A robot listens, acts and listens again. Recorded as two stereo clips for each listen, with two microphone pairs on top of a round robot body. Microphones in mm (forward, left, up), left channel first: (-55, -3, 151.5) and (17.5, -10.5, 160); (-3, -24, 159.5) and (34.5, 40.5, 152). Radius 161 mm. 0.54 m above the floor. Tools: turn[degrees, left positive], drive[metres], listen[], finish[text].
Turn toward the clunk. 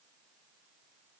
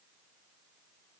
Action: listen[]
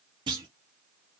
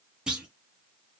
Thought: The clunk: 20° right.
Action: turn[-20]
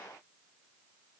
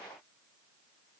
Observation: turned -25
Action: finish[Facing where the clunk came from. I can't hear it now.]